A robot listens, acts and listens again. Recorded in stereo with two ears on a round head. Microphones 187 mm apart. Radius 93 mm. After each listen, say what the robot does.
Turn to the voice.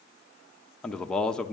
Turn 30° left.
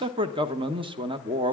Turn 25° right.
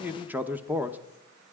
Turn 10° right.
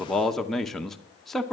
Facing the man speaking.